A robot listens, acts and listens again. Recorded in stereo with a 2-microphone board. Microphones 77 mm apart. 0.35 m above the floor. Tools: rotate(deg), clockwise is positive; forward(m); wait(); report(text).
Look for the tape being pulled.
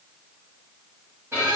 wait()
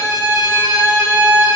wait()
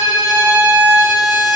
report("I can't make out tape being pulled to turn to.")